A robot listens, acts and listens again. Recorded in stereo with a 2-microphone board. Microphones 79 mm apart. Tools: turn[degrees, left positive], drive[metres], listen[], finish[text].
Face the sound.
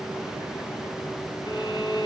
Action: turn[90]
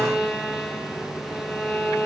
Action: finish[Found it: a violin, straight ahead.]